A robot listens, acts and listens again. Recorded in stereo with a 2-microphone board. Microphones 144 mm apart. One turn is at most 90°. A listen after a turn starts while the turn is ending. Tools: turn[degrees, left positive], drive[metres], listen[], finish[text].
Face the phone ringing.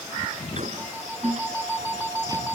Action: turn[-30]
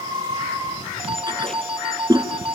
Thought: So it is at 135° right.
Action: turn[-90]
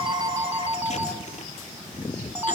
Thought: The phone ringing is now 15° right.
Action: turn[-15]
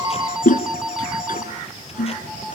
Action: finish[Found it: a phone ringing, straight ahead, 2 to 4 m away.]